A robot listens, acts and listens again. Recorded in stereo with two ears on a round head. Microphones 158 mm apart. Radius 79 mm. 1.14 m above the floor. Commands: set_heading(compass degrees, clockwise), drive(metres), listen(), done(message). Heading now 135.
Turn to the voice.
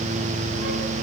listen()
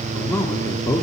set_heading(115)
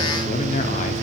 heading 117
set_heading(342)
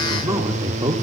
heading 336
set_heading(356)
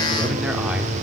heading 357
set_heading(7)
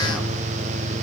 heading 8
listen()
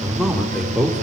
done("Found it: a man speaking, straight ahead.")